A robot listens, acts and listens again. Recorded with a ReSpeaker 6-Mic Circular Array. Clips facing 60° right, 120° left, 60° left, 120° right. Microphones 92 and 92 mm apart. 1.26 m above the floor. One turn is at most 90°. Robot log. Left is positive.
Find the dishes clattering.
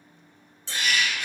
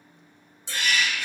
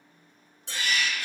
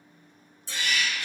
note: The dishes clattering: 45° left.
cmd yaw +45
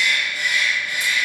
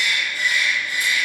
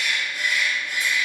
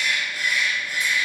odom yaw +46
cmd idle
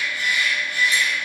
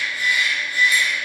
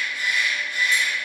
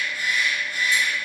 cmd idle
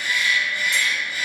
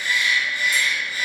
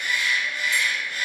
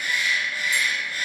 end: Facing where the dishes clattering came from. I can't hear it now.